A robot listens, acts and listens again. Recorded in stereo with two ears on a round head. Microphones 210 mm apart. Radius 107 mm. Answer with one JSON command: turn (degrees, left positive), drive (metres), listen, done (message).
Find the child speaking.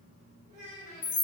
{"turn": -25}
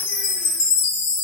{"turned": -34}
{"listen": true}
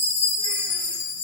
{"listen": true}
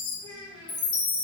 {"turn": 20}
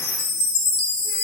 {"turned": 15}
{"listen": true}
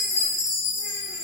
{"listen": true}
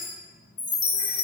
{"done": "I heard a child speaking from this way, but can't make it out now."}